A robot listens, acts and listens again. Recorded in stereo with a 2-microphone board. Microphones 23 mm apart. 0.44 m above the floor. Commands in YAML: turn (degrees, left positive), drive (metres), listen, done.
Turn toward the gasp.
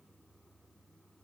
listen: true
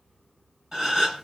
turn: -30
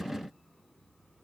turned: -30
listen: true
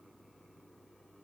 done: "I heard a gasp, but can't make it out now. It was about straight ahead or 120° right."